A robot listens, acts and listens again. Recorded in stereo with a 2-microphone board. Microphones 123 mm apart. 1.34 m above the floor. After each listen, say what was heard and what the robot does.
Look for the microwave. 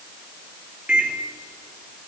Turn 30° right.
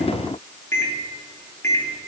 So it is at 20° left. Turn 20° left.
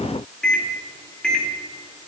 Found it: a microwave, straight ahead, 2 to 4 m away.